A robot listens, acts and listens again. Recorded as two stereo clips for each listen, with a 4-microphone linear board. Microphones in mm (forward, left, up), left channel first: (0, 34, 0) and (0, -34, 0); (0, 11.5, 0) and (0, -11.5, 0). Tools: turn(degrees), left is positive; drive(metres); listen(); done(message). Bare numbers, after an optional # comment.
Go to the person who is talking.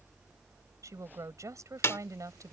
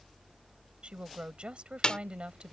# The woman speaking: about 50° right or 130° right.
turn(-50)
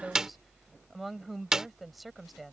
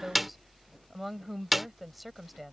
drive(1.0)
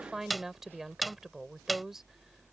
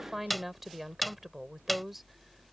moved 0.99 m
drive(1.0)
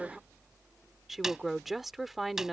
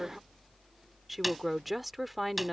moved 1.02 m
drive(1.0)
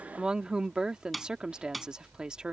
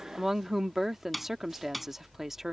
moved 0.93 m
# The woman speaking is now 15° right.
turn(-15)
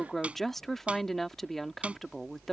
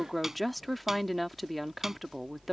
drive(1.0)
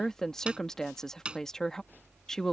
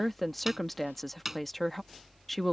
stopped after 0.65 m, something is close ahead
# The woman speaking is now 10° left.
turn(10)
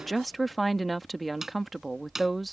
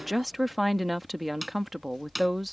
done("I am next to the woman speaking.")